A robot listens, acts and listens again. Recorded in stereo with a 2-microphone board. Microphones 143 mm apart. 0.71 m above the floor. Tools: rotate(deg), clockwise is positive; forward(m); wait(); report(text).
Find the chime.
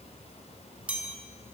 rotate(30)
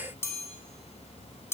rotate(-20)
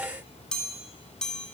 report("Facing the chime.")